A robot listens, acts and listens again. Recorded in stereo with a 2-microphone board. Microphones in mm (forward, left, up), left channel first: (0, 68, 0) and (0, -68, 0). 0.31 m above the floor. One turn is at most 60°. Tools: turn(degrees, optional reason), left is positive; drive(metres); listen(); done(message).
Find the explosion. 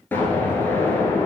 turn(degrees=30)
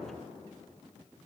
listen()
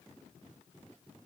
done("I heard an explosion, but can't make it out now. It was about 15° right or 135° left.")